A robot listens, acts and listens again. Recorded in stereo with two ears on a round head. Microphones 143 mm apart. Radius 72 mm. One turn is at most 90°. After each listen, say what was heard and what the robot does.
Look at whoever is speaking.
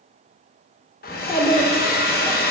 The child speaking: about 20° left or 160° left. Turn 20° left.
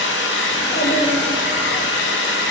Keep listening.
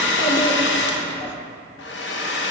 So it is at 135° left. Turn 90° left.
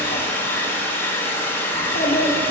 The child speaking is now 55° left. Turn 55° left.
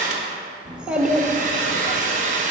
Found it: a child speaking, straight ahead, under 1 m away.